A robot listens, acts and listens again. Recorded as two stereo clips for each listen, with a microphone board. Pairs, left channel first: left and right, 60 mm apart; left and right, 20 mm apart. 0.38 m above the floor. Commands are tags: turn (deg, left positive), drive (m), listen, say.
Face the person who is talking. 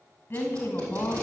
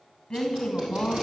<turn deg="35"/>
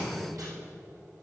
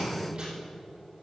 <listen/>
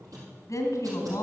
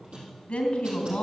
<turn deg="110"/>
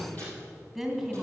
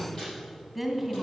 <say>Found it: a woman speaking, straight ahead.</say>